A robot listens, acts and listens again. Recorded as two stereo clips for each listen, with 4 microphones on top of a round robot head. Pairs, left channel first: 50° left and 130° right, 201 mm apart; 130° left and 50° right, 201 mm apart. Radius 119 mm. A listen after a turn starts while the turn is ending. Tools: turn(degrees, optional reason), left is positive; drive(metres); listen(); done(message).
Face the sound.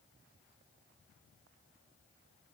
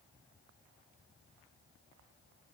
listen()
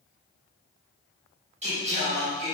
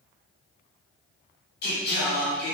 turn(degrees=170, reason="The singing: 170° left.")
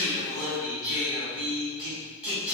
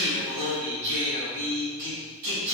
turn(degrees=-45, reason="The singing is now 45° right.")
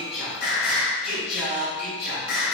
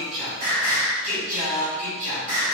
done("Facing the singing, over 4 m away.")